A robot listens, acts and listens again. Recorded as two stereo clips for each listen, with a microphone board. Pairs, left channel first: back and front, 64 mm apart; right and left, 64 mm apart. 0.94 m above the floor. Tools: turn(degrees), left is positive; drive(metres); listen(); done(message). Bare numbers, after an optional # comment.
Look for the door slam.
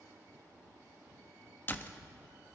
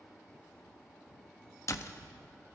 # The door slam: 125° right.
turn(-125)
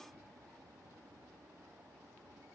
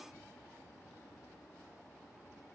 done("Facing where the door slam came from. I can't hear it now.")